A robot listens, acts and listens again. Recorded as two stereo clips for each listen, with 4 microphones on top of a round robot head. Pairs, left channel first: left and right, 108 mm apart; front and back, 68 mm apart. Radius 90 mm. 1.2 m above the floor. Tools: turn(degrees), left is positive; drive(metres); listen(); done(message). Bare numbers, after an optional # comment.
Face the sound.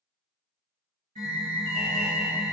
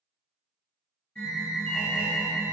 # The alarm: 80° right.
turn(-80)
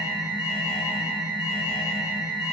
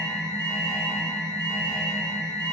# The alarm is now 10° right.
turn(-10)
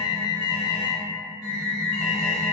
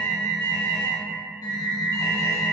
done("Facing the alarm.")